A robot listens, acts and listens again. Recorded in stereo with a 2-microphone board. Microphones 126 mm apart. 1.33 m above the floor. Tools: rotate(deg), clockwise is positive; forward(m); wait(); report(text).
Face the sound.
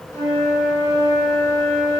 rotate(-30)
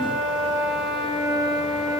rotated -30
report("Found it: a flute, straight ahead.")